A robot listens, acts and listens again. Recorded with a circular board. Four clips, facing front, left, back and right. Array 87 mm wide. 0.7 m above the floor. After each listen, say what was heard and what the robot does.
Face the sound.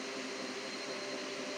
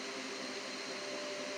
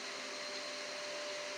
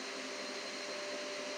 Keep listening.
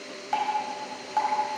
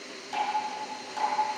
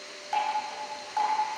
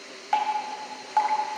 The dripping: 80° right. Turn 80° right.
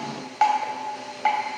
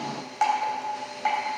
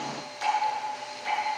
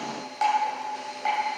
The dripping is now 15° left. Turn 15° left.
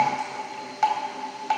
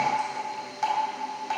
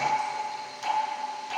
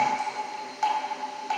Facing the dripping, 2 to 4 m away.